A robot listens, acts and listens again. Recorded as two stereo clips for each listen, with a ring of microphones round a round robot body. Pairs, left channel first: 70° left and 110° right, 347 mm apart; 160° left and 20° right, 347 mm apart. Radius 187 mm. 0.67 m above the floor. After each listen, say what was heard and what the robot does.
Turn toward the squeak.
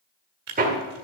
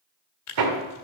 Keep listening.
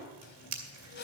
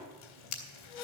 The squeak: 130° left. Turn 130° left.
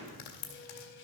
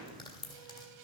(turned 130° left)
The squeak is now 10° left. Turn 10° left.
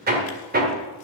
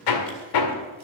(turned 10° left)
Keep listening.
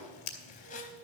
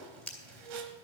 Facing the squeak.